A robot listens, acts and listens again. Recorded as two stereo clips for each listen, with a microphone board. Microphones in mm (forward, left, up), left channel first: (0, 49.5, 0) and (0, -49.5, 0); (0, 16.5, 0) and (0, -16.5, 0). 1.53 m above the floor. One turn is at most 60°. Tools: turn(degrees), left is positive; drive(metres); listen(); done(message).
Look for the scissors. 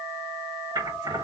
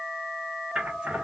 turn(degrees=-40)
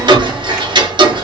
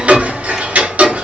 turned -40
listen()
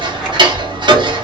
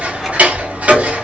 listen()
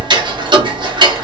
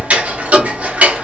done("I heard scissors, but can't make it out now. It was about straight ahead or 100° right.")